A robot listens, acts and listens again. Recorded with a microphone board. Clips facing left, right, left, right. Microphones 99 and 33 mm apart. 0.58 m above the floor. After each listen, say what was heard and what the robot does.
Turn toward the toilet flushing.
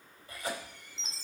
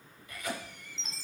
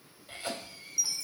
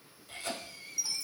Keep listening.
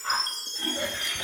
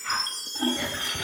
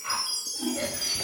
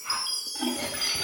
The toilet flushing: about 50° right or 130° right. Turn 50° right.
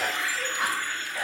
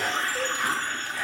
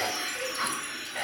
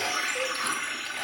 So it is at 65° right. Turn 65° right.
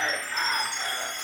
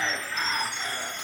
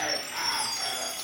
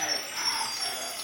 Keep listening.
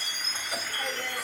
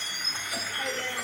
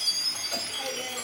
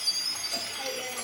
Found it: a toilet flushing, straight ahead.